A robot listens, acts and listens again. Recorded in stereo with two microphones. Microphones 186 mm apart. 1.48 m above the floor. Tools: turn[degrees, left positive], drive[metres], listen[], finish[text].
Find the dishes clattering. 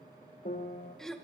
Action: listen[]
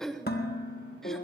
Thought: The dishes clattering: about 60° left or 120° left.
Action: turn[60]
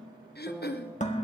Thought: So it is at 45° left.
Action: turn[45]
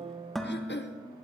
Action: finish[Found it: dishes clattering, straight ahead, 1 to 2 m away.]